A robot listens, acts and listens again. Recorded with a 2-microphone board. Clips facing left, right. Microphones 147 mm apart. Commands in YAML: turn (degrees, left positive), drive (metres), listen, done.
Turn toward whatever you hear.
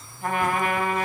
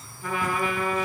turn: 60
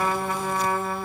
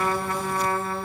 turn: 10
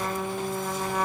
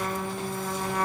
done: "Facing the trumpet."